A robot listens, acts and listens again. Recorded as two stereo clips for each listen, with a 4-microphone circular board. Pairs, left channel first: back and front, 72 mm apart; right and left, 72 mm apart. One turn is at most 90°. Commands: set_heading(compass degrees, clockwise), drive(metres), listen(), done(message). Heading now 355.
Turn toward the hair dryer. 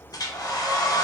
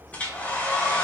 set_heading(85)
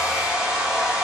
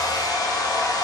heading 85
set_heading(160)
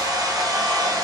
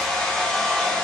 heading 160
set_heading(170)
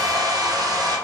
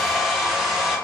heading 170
done("Found it: a hair dryer, straight ahead.")